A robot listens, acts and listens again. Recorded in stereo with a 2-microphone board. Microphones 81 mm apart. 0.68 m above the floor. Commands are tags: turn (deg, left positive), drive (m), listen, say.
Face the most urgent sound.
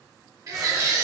<turn deg="-45"/>
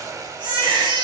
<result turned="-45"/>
<turn deg="-80"/>
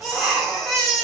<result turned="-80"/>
<say>Found it: a baby crying, straight ahead.</say>